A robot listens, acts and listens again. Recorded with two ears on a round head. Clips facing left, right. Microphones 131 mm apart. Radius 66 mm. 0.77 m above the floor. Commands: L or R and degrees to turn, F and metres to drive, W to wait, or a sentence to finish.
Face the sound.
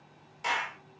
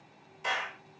L70
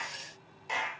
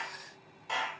L20
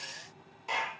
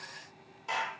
Facing the clap, 1 to 2 m away.